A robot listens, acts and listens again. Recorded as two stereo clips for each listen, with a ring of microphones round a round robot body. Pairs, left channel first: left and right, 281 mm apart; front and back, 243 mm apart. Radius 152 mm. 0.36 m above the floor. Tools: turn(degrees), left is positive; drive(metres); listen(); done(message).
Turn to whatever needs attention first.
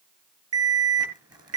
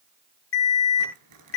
turn(degrees=-50)
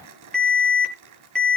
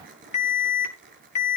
done("Found it: an alarm, straight ahead.")